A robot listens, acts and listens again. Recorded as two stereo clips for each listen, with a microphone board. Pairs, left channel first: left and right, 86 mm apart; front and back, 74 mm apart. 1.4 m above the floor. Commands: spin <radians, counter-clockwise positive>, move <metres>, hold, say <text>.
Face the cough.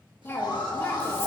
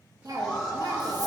spin 2.71
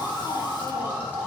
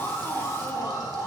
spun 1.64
spin 1.05
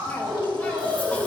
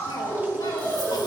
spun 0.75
spin 0.26
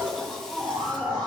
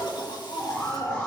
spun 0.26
say Facing the cough, 1 to 2 m away.